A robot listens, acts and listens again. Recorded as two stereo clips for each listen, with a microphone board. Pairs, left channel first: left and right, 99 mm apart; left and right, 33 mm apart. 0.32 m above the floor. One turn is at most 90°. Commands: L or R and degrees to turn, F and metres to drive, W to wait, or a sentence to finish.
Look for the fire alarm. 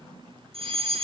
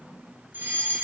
R75
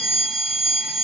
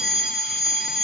Found it: a fire alarm, straight ahead, over 4 m away.